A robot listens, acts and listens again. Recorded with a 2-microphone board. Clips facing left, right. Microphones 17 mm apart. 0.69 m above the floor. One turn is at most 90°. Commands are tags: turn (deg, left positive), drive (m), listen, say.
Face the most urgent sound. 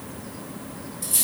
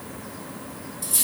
<listen/>
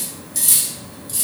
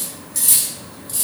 <listen/>
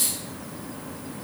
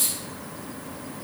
<say>I can't make out anything urgent, only cutlery clinking.</say>